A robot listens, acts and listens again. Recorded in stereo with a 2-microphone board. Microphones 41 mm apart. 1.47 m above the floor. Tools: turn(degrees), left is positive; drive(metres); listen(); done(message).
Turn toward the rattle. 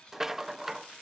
turn(degrees=-30)
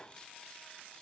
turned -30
turn(degrees=20)
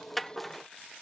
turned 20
done("Facing the rattle.")